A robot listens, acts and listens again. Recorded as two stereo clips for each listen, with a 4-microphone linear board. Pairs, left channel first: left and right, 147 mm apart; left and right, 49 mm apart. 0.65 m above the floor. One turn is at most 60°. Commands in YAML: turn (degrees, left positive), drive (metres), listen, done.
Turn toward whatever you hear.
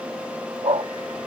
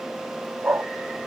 turn: -40
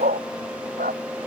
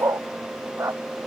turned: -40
turn: -60
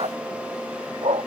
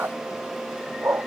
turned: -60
turn: -45
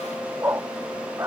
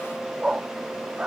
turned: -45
turn: -20
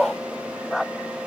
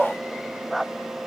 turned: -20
done: "Facing the dog barking."